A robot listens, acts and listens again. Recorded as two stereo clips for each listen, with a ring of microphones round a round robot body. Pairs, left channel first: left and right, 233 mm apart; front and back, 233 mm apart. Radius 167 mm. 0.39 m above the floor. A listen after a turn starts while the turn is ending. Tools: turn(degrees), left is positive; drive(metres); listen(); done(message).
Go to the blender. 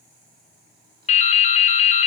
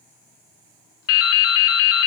listen()
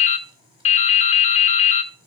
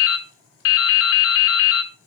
listen()
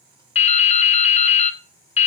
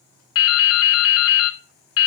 done("I can't make out a blender to turn to.")